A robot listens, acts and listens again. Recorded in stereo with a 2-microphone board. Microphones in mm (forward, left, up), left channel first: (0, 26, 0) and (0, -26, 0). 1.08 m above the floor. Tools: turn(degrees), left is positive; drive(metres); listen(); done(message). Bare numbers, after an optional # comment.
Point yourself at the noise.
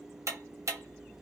# The ticking: about 65° right or 115° right.
turn(-65)
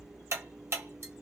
# So it is at 50° right.
turn(-50)
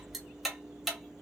done("Facing the ticking, under 1 m away.")